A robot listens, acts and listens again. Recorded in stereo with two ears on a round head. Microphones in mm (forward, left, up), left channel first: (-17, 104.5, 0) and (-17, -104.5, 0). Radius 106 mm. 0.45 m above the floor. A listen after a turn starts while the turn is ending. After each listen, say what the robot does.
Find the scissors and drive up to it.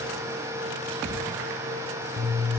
Turn 25° left.
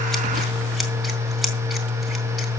Drive 1.0 m forward.
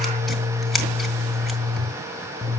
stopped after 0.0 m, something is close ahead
Something is in my way. I am facing the scissors but have not reached it.